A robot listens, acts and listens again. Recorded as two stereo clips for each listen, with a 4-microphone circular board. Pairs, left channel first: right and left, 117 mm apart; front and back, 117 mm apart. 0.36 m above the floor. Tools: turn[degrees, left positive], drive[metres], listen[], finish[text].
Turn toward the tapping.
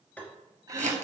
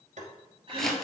Thought: The tapping: 165° right.
Action: turn[-165]
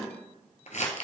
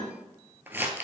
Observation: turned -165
Action: listen[]
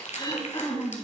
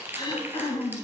Action: listen[]
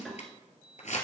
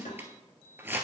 Action: finish[I heard tapping from this way, but can't make it out now.]